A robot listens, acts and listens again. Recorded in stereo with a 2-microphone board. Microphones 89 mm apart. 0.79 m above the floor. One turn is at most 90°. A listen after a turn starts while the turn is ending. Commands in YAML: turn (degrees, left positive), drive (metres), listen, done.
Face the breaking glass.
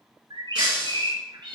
turn: -30
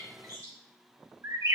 listen: true
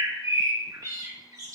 done: "I heard breaking glass, but can't make it out now. It was about 20° left or 140° right."